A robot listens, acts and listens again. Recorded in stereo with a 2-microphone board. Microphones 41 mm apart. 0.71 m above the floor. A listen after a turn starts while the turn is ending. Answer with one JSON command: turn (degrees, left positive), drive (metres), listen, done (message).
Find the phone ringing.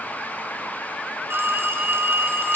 {"turn": -90}
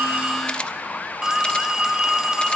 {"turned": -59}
{"turn": -20}
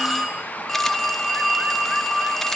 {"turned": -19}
{"done": "Facing the phone ringing."}